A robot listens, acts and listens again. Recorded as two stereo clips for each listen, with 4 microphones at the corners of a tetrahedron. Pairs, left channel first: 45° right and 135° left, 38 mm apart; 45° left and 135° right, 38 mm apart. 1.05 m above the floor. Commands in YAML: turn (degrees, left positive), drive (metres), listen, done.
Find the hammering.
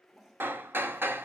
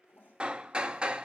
turn: 160
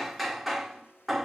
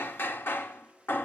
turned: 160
turn: 45
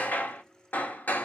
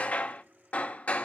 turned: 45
done: "Found it: hammering, straight ahead."